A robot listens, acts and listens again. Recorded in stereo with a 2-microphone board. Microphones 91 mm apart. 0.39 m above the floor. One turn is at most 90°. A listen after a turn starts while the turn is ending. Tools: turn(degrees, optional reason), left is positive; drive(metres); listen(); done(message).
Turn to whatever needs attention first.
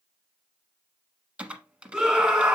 turn(degrees=-30)
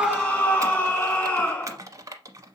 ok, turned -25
turn(degrees=20, reason="So it is at 20° left.")
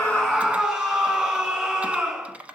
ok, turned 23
done("Found it: a scream, straight ahead.")